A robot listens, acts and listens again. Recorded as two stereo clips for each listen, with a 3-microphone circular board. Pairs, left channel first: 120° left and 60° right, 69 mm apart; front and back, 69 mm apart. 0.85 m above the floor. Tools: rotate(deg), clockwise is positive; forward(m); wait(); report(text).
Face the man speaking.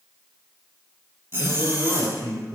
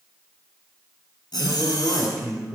rotate(90)
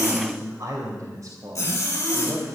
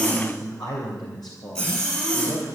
rotate(20)
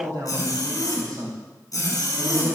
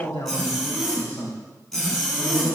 rotate(15)
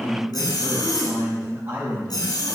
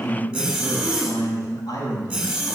report("Facing the man speaking.")